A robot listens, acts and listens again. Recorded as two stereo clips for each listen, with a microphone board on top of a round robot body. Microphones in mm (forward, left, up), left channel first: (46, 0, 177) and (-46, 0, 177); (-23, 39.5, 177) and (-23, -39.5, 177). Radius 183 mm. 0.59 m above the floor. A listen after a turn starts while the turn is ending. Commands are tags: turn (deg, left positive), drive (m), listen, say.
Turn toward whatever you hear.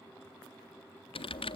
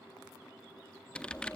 <turn deg="15"/>
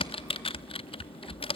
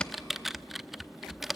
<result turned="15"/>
<say>Found it: typing on a keyboard, straight ahead, under 1 m away.</say>